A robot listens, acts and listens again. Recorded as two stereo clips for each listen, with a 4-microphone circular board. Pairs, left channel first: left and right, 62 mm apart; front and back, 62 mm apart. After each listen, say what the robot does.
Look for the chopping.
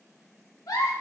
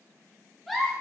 Keep listening.
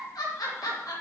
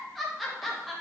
Keep listening.
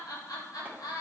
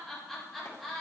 I can't make out chopping, only a giggle.